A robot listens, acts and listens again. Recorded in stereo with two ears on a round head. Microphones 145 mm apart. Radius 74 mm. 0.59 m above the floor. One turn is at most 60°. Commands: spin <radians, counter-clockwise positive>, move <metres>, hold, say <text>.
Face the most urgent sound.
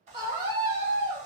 spin -0.52
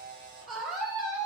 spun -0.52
say Facing the scream, 1 to 2 m away.